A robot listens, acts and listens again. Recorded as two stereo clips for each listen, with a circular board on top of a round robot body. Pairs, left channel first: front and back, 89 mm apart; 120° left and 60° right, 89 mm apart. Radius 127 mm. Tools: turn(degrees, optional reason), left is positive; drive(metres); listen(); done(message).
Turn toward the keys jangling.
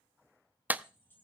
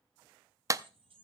turn(degrees=-70, reason="The keys jangling: 70° right.")
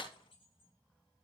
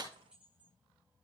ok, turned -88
turn(degrees=20, reason="The keys jangling is now 20° left.")
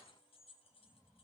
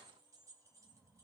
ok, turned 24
done("Found it: keys jangling, straight ahead.")